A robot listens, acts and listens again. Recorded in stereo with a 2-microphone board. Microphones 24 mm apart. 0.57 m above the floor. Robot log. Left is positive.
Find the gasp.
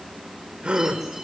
note: The gasp: about 45° right or 135° right.
cmd yaw -45
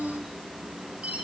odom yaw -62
cmd idle
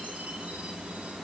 end: I heard a gasp, but can't make it out now. It was about 15° left or 70° right.